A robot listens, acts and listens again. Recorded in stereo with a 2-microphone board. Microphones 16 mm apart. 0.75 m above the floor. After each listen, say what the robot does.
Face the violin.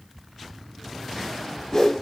Keep listening.
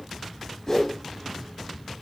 Keep listening.
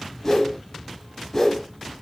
I can't make out a violin to turn to.